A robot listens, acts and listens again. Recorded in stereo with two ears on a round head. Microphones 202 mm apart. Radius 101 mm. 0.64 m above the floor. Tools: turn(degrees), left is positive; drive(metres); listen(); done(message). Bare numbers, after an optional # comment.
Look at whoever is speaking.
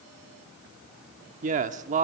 # The man speaking: about 35° right or 145° right.
turn(-35)
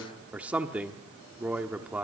done("Facing the man speaking.")